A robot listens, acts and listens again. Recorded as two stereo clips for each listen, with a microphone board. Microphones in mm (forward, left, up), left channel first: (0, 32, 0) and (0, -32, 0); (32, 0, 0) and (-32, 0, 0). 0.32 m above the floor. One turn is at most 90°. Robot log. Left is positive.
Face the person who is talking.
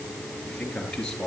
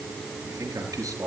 note: The man speaking: 170° left.
cmd yaw +90
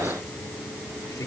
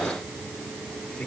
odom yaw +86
note: Nothing new. It was at 80° left.
cmd yaw +80
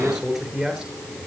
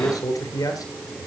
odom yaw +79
end: Facing the man speaking.